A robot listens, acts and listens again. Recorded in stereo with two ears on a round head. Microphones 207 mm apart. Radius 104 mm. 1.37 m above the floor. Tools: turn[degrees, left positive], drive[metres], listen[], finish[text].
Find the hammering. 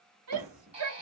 Thought: The hammering: about 40° right or 140° right.
Action: turn[-40]
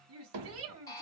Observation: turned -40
Thought: So it is at 100° right.
Action: turn[-100]
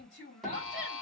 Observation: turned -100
Action: finish[Facing the hammering, 2 to 4 m away.]